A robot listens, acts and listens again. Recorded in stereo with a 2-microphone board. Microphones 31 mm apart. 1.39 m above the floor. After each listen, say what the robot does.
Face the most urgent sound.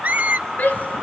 Turn 75° left.
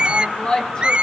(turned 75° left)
Turn 30° left.
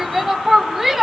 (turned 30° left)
Facing the shout.